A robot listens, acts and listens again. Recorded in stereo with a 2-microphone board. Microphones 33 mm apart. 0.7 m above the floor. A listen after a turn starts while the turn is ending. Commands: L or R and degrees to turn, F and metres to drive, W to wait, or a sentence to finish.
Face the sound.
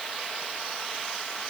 W
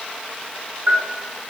R55
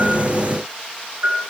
R70
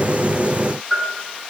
R15
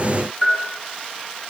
Found it: a bell, straight ahead.